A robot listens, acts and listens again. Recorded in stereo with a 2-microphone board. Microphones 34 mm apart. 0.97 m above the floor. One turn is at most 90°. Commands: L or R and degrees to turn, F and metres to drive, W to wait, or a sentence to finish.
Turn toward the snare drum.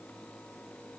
W
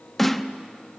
L30
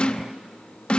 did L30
L90
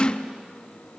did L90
L35
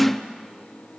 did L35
Found it: a snare drum, straight ahead, under 1 m away.